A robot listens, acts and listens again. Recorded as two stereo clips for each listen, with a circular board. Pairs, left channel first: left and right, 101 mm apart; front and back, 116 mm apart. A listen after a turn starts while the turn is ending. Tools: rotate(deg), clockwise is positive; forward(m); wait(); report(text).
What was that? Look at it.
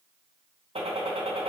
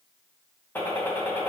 rotate(75)
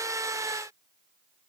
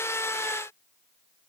report("I heard a gunshot from this way, but can't make it out now.")